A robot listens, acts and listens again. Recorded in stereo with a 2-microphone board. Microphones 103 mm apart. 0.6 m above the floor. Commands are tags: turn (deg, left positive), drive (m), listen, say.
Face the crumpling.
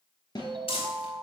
<turn deg="70"/>
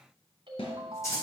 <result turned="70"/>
<turn deg="30"/>
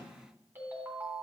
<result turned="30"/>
<listen/>
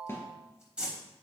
<turn deg="-10"/>
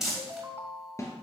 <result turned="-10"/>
<say>Found it: crumpling, straight ahead.</say>